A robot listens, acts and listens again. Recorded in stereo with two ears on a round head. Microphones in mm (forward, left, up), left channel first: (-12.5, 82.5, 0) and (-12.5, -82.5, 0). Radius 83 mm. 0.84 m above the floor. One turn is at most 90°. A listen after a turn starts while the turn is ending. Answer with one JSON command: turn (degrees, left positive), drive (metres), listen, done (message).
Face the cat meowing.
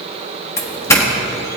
{"listen": true}
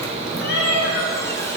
{"turn": 65}
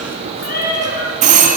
{"turn": 50}
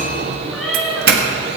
{"done": "Facing the cat meowing."}